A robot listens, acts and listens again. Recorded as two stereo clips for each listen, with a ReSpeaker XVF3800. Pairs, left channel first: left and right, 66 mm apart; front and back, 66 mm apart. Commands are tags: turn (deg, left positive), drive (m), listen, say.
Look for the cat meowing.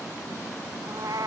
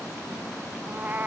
<turn deg="-115"/>
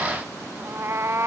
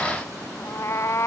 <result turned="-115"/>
<turn deg="-45"/>
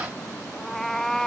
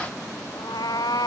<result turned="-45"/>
<say>Facing the cat meowing.</say>